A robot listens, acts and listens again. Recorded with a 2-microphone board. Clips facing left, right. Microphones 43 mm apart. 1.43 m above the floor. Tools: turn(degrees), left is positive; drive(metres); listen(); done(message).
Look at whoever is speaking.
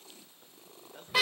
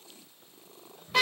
turn(degrees=65)
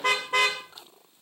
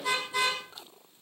listen()
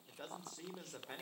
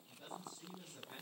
turn(degrees=70)
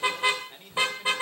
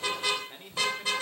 turn(degrees=-10)
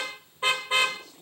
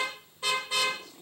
done("Found it: a man speaking, straight ahead, over 4 m away.")